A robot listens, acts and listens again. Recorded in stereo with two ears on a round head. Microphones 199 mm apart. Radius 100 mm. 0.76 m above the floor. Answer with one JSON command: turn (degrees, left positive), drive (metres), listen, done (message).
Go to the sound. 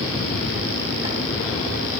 {"listen": true}
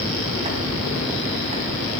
{"listen": true}
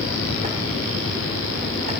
{"done": "I can't make out anything."}